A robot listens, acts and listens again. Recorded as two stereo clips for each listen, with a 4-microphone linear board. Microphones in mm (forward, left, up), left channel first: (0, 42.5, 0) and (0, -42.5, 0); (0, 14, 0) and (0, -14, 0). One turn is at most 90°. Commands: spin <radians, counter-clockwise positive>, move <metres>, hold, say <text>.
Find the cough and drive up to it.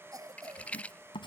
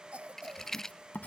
spin -0.87
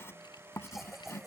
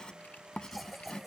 hold
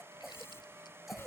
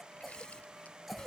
move 1.0
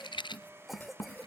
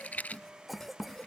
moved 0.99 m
move 1.0
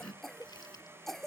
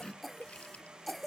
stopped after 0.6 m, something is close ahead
say Arrived at the cough, straight ahead.